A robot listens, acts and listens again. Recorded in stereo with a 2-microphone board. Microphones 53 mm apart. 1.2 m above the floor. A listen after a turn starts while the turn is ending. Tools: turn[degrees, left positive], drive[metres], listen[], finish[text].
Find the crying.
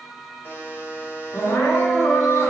Action: turn[90]
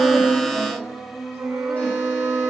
Action: finish[Facing the crying.]